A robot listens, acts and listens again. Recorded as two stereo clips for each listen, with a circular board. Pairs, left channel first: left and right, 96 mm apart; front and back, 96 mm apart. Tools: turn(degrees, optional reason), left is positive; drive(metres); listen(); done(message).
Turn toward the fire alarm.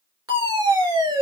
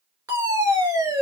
turn(degrees=-135, reason="The fire alarm: 135° right.")
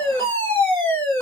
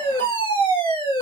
turn(degrees=20, reason="The fire alarm is now 20° left.")
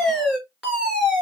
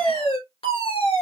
done("Found it: a fire alarm, straight ahead.")